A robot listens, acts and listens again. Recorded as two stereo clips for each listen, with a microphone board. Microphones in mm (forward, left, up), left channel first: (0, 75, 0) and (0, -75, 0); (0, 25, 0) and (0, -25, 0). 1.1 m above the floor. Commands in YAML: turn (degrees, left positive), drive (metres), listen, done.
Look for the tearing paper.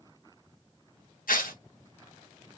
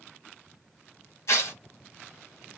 turn: 70
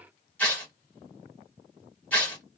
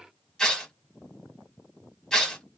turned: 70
turn: 10
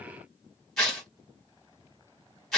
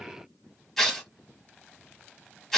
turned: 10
done: "Facing the tearing paper, 1 to 2 m away."